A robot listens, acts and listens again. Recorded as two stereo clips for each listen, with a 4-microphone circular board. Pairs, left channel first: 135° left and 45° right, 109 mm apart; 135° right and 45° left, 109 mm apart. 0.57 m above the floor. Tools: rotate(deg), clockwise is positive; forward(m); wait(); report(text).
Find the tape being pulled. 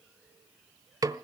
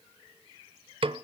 wait()
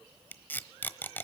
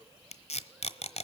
rotate(150)
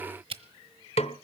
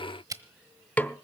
rotate(10)
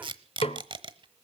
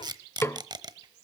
report("Found it: tape being pulled, straight ahead.")